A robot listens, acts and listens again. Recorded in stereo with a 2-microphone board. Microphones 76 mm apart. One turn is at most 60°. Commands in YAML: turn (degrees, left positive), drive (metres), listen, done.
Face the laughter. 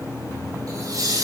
turn: -50
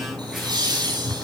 turn: -60
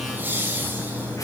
turn: -25
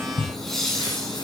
done: "Found it: laughter, straight ahead."